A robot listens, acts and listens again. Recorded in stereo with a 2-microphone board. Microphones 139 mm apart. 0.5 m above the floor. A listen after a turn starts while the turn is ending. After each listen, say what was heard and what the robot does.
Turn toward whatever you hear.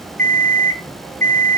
The alarm clock: about 60° right or 120° right. Turn 60° right.
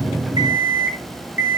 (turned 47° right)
So it is at 15° right. Turn 15° right.
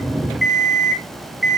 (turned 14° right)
Facing the alarm clock.